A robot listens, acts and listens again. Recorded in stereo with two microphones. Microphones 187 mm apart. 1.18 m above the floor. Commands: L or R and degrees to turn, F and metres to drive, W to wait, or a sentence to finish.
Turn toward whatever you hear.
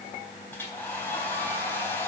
L30
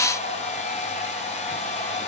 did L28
L140
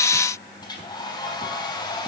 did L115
L25
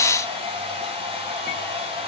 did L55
R30
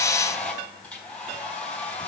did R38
L10
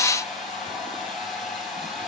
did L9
Facing the hair dryer, 2 to 4 m away.